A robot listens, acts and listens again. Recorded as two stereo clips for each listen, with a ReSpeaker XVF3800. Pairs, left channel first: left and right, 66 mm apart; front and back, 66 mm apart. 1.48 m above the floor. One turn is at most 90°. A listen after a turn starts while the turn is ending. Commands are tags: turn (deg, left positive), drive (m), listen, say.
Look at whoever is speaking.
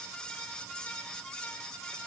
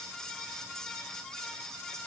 <listen/>
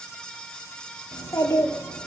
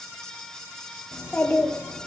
<turn deg="55"/>
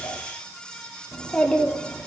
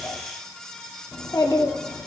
<turn deg="15"/>
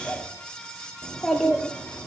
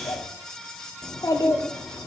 <say>Facing the child speaking, 2 to 4 m away.</say>